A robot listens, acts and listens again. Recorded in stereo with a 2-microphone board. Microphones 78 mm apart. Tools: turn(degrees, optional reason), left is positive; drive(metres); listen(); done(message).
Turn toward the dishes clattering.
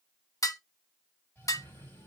turn(degrees=45, reason="The dishes clattering: about 45° left or 135° left.")
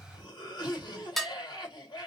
done("Facing the dishes clattering.")